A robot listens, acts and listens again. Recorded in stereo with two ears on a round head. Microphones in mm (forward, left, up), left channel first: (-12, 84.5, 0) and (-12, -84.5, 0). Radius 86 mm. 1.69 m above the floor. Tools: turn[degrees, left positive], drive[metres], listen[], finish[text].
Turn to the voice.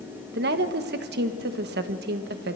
Thought: The woman speaking: about 60° right or 120° right.
Action: turn[-60]
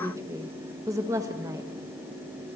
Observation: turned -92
Thought: So it is at 20° right.
Action: turn[-20]
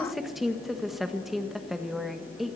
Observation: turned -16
Action: finish[Facing the woman speaking.]